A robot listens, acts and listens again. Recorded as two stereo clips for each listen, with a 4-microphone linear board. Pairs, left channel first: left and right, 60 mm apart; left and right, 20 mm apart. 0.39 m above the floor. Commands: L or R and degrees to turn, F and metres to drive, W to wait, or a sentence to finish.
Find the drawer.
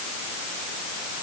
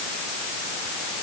W
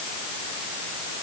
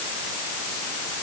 W
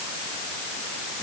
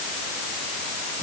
I can't make out a drawer to turn to.